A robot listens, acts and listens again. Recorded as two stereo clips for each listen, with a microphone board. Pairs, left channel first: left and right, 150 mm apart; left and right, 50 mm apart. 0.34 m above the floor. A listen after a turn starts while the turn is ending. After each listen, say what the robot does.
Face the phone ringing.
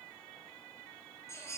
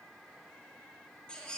Keep listening.
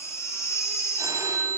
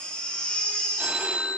Turn 20° right.
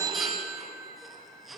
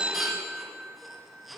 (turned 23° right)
Turn 135° right.
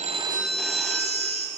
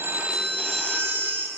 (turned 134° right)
Found it: a phone ringing, straight ahead, 1 to 2 m away.